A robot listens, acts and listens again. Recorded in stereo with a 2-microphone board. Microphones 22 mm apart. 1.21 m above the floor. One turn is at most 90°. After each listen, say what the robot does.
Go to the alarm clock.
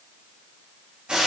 Keep listening.
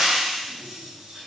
Keep listening.
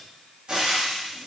I can't make out an alarm clock, only frying.